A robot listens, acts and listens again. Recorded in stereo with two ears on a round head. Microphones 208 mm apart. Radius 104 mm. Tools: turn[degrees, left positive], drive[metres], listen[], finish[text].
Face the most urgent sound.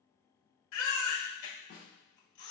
Thought: The baby crying: about 65° left or 115° left.
Action: turn[65]
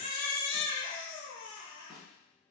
Thought: So it is at 40° left.
Action: turn[40]
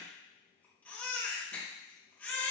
Action: finish[Facing the baby crying.]